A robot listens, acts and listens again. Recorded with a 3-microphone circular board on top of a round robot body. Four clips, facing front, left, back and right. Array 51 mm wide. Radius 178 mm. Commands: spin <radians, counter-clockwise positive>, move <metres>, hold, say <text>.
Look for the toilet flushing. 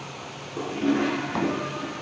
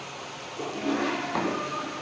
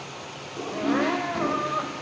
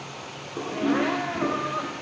spin -0.79
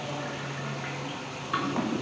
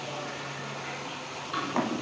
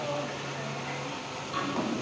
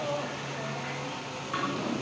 spin -0.17
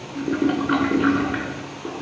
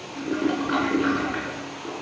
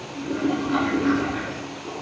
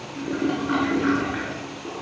say Found it: a toilet flushing, straight ahead, over 4 m away.